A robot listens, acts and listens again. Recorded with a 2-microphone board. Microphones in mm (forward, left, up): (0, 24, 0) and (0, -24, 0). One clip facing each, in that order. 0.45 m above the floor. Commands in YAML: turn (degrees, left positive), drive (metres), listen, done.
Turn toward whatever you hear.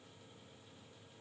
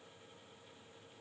listen: true
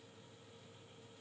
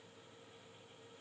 listen: true
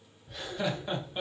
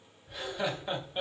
turn: -30
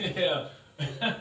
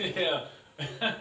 turn: -20
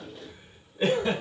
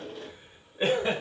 turn: -150
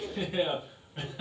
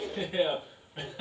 done: "Facing the laughter, 2 to 4 m away."